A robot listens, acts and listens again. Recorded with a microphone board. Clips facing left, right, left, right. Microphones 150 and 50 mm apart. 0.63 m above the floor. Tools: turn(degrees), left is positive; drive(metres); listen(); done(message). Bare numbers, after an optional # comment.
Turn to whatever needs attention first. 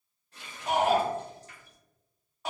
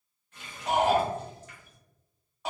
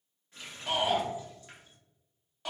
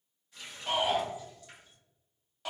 turn(30)
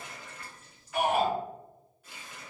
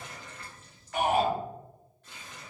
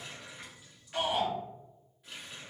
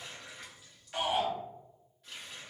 # So it is at 25° right.
turn(-25)
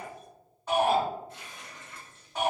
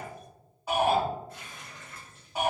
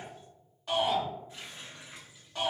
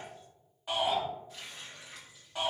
# The shout is now 10° right.
turn(-10)
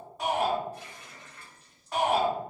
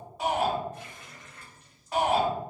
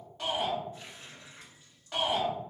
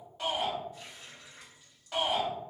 done("Facing the shout, 1 to 2 m away.")